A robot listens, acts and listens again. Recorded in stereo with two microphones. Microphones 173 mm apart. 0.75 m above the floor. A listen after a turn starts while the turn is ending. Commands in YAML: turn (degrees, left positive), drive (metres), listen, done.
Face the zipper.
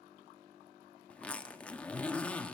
turn: 30
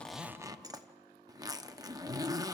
turn: -20
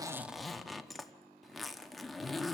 done: "Facing the zipper."